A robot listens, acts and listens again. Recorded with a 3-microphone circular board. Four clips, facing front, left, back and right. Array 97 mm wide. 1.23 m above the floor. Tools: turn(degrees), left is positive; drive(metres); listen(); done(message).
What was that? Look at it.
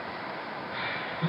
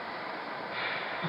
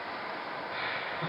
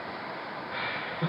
turn(degrees=-100)
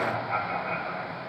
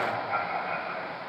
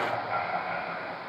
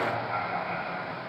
done("Found it: laughter, straight ahead, over 4 m away.")